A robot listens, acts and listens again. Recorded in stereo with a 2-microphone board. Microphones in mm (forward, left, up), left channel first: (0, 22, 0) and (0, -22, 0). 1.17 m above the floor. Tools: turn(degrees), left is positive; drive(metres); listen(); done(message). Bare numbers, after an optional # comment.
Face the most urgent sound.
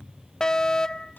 # The fire alarm: about 15° left or 165° left.
turn(15)
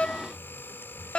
# So it is at 150° left.
turn(150)
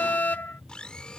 # The fire alarm is now 55° left.
turn(55)
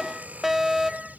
# The fire alarm is now 10° right.
turn(-10)
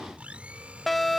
done("Found it: a fire alarm, straight ahead.")